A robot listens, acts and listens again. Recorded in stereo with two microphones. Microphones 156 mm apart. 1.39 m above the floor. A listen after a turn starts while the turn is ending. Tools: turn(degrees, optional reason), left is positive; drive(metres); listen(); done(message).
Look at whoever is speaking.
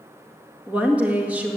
turn(degrees=-30)
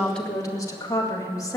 turn(degrees=20, reason="So it is at 20° left.")
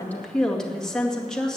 done("Facing the woman speaking.")